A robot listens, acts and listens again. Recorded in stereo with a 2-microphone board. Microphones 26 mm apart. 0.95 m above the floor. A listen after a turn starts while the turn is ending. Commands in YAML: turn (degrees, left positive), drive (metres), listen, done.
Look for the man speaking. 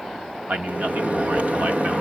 turn: -90
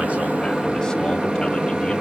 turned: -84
listen: true
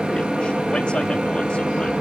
listen: true
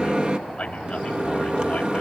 turn: 30
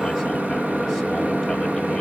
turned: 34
listen: true
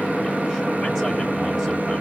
listen: true
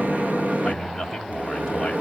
done: "Found it: a man speaking, straight ahead, over 4 m away."